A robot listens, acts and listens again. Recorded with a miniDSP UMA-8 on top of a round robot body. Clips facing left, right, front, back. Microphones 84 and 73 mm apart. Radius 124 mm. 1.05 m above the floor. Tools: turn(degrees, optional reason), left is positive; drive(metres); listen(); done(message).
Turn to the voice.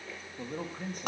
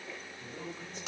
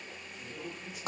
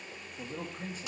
turn(degrees=130, reason="The man speaking: 130° left.")
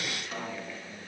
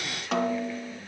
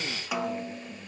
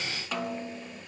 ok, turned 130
listen()
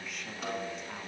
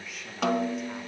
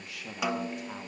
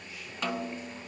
done("Facing the man speaking, 2 to 4 m away.")